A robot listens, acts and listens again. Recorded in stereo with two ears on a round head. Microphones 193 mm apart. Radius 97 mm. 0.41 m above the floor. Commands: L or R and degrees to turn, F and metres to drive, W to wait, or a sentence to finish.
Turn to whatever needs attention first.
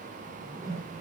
W
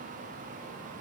W
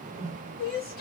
L45
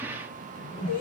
L90
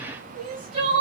R25
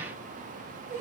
R10
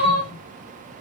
Facing the crying, 1 to 2 m away.